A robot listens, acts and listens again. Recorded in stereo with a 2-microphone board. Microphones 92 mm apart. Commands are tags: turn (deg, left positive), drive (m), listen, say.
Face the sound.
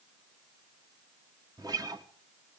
<turn deg="-45"/>
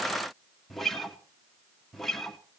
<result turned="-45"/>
<say>Facing the guitar.</say>